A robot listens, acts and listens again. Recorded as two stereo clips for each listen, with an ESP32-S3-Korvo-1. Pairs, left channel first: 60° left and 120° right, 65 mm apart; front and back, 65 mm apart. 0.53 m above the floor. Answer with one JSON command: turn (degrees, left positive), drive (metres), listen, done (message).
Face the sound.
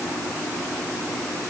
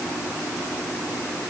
{"listen": true}
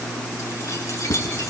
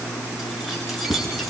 {"turn": 90}
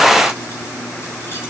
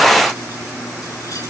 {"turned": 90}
{"listen": true}
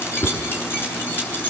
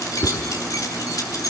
{"done": "Found it: keys jangling, straight ahead."}